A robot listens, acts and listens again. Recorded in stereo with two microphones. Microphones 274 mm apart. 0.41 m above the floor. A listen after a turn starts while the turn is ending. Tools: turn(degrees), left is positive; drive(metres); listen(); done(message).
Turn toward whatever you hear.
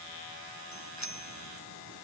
turn(degrees=90)
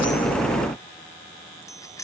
turn(degrees=10)
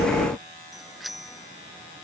done("Found it: a bicycle bell, straight ahead.")